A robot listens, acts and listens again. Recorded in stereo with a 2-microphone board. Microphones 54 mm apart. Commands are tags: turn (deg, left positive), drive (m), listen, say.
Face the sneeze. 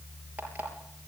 <listen/>
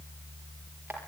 <listen/>
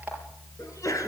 <turn deg="75"/>
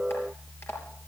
<listen/>
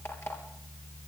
<say>I heard a sneeze, but can't make it out now. It was about straight ahead or 30° left.</say>